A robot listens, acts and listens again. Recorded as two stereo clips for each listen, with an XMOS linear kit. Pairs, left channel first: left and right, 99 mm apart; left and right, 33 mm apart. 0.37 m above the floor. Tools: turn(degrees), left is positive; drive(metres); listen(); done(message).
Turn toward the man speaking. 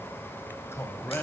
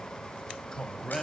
turn(degrees=20)
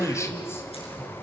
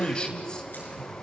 turn(degrees=20)
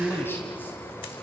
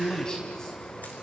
turn(degrees=25)
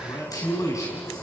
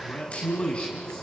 turn(degrees=35)
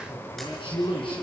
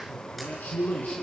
turn(degrees=120)
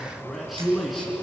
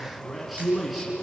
done("Found it: a man speaking, straight ahead, 2 to 4 m away.")